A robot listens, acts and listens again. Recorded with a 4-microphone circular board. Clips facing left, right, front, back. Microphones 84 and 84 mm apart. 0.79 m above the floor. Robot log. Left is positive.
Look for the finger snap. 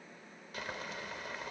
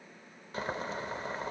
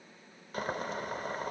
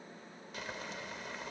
cmd idle
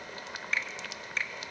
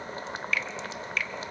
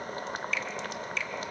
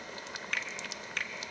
note: The finger snap: 150° left.
cmd yaw +150
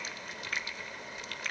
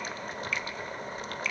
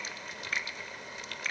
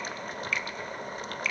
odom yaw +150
note: The finger snap is now 50° left.
cmd yaw +50
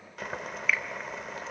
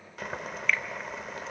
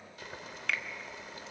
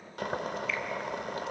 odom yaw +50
cmd idle
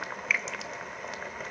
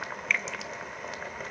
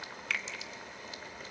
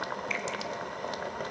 end: Found it: a finger snap, straight ahead.